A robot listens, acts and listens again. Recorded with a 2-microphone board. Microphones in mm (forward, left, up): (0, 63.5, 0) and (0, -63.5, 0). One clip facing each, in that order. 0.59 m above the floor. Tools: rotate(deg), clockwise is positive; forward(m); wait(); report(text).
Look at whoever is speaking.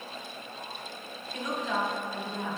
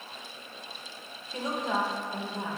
rotate(30)
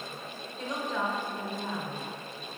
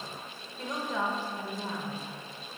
report("Found it: a woman speaking, straight ahead, 1 to 2 m away.")